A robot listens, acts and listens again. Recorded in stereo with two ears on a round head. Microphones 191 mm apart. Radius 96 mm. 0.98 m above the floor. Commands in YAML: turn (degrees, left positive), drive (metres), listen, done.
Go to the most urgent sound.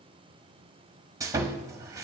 listen: true
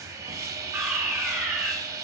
turn: -30
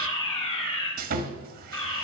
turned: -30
turn: 25
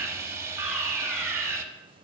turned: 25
drive: 1.0
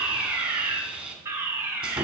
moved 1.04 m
turn: -15
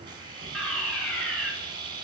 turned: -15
drive: 1.0
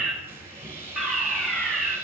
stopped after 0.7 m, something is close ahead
done: "Arrived at the fire alarm, straight ahead."